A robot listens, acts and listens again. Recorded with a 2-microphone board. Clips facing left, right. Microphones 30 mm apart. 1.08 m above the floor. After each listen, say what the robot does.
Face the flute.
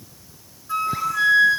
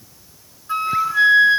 Turn 30° right.
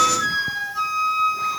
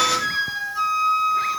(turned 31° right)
Found it: a flute, straight ahead.